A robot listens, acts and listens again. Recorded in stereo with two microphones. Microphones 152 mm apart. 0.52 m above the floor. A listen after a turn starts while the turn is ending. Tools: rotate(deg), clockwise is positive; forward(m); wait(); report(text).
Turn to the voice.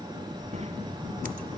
rotate(45)
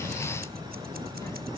wait()
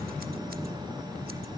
rotate(-30)
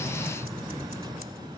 wait()
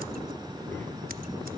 wait()
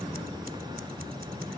report("I heard a child speaking from this way, but can't make it out now.")